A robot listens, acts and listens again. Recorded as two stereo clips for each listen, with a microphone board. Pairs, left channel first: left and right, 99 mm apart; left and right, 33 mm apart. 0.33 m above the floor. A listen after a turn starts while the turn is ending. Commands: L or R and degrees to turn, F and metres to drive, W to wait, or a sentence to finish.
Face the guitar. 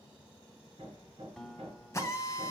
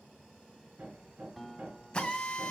L30
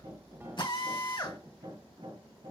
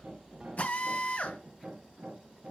W
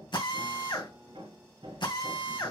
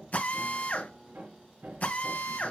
W
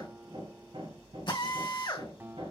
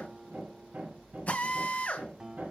R25
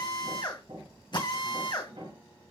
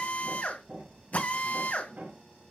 W
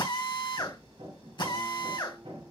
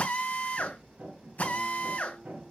W
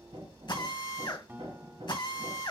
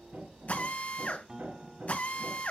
R25
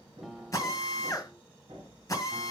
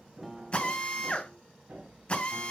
Facing the guitar.